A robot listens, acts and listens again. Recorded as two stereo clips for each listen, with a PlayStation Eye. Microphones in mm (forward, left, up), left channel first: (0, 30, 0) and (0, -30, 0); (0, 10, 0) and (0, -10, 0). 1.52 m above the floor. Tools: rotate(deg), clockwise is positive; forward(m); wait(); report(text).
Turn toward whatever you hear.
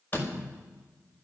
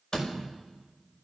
rotate(-30)
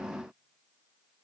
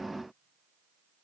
wait()
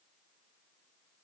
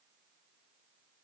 report("I heard a door slam, but can't make it out now. It was about straight ahead or 120° left.")